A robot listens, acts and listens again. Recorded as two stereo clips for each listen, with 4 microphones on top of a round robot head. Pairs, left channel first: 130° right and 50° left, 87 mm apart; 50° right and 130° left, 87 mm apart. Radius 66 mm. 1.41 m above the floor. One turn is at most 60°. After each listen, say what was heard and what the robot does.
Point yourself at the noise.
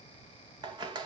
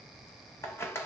The scissors: 10° left. Turn 10° left.
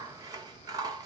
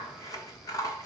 Found it: scissors, straight ahead.